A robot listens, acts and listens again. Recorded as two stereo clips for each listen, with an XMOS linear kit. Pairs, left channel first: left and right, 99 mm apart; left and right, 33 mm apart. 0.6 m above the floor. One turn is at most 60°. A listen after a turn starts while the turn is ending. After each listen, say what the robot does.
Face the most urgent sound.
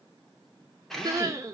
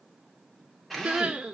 Turn 30° right.
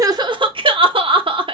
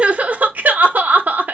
Turn 60° right.
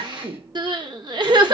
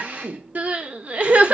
Turn 50° right.
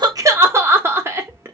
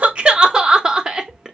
Turn 25° right.
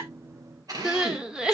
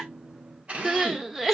Turn 10° right.
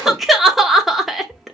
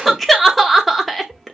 Found it: crying, straight ahead, under 1 m away.